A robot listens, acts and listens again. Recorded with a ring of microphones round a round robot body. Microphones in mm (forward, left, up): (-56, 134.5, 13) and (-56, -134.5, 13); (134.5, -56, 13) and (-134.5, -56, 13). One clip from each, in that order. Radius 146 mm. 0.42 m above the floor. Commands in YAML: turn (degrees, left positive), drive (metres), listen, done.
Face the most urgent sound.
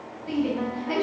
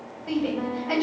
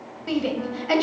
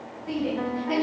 turn: -15
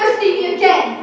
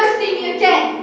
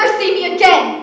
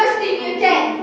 done: "Found it: a shout, straight ahead, 2 to 4 m away."